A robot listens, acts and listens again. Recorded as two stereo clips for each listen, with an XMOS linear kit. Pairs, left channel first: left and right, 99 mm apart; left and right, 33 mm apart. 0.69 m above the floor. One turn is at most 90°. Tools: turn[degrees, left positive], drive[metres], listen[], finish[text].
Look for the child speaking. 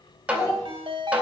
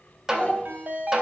Thought: The child speaking: about 30° left or 150° left.
Action: turn[30]
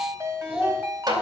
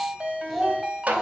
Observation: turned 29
Thought: So it is at 10° right.
Action: turn[-10]
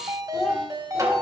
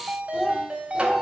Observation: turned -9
Thought: The child speaking is now 10° right.
Action: turn[-10]
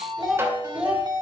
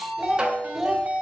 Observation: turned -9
Thought: The child speaking is now 15° right.
Action: turn[-15]
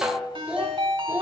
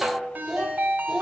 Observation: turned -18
Thought: The child speaking is now 20° right.
Action: turn[-20]
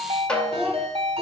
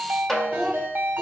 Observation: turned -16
Action: finish[Facing the child speaking.]